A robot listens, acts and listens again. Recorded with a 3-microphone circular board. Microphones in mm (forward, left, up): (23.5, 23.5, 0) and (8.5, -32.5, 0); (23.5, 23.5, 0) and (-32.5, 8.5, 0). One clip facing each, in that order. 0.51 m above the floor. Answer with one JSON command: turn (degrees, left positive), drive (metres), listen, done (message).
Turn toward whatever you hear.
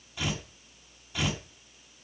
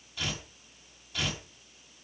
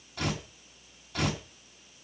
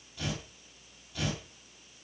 {"done": "Found it: tearing paper, straight ahead."}